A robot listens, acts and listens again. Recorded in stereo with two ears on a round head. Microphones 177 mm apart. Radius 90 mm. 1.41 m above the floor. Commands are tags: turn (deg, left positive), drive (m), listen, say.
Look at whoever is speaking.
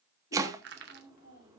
<turn deg="55"/>
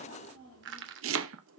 <turn deg="80"/>
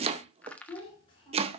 <turn deg="25"/>
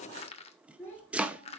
<turn deg="10"/>
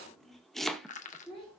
<say>Found it: a child speaking, straight ahead, over 4 m away.</say>